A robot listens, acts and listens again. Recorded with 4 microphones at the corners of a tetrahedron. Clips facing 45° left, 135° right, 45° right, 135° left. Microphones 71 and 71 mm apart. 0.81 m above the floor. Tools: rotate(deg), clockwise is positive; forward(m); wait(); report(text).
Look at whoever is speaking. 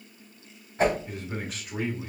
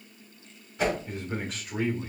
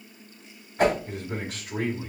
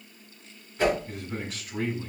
rotate(45)
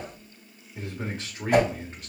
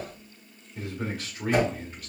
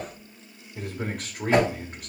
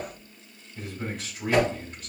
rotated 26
rotate(15)
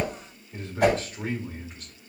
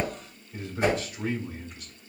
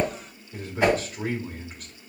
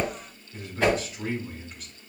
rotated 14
report("Facing the man speaking, 1 to 2 m away.")